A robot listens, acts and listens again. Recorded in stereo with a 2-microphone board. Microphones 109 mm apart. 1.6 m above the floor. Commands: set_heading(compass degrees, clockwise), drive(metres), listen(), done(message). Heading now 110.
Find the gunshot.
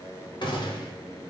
set_heading(60)
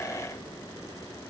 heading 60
listen()
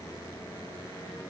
done("I heard a gunshot, but can't make it out now. It was about straight ahead or 80° left.")